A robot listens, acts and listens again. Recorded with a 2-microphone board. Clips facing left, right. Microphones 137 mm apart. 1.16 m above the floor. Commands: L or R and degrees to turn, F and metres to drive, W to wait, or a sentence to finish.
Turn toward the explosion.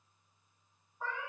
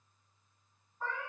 W
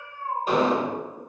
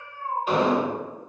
L40
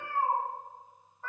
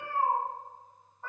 W
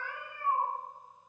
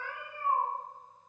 I heard an explosion, but can't make it out now. It was about straight ahead or 100° left.